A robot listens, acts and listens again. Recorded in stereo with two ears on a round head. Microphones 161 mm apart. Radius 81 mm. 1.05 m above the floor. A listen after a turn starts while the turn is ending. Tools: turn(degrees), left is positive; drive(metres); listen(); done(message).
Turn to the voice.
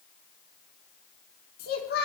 turn(degrees=60)
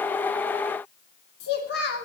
turn(degrees=60)
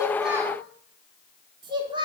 turn(degrees=-25)
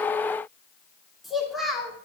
done("Found it: a child speaking, straight ahead.")